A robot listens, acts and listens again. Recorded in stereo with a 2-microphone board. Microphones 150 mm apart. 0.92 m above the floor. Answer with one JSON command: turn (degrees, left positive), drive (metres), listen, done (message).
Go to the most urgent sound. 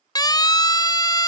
{"turn": 25}
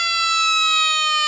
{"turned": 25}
{"drive": 1.0}
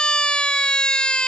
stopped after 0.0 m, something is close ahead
{"done": "Blocked. The siren is further on, straight ahead."}